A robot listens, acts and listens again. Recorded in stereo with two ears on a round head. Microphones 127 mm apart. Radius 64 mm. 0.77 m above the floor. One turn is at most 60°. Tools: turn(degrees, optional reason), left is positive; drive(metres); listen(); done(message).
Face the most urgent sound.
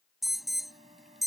turn(degrees=30)
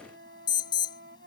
turn(degrees=60, reason="So it is at 150° left.")
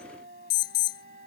turn(degrees=60, reason="The alarm is now 95° left.")
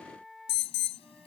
turn(degrees=40, reason="The alarm is now 40° left.")
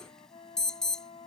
done("Facing the alarm.")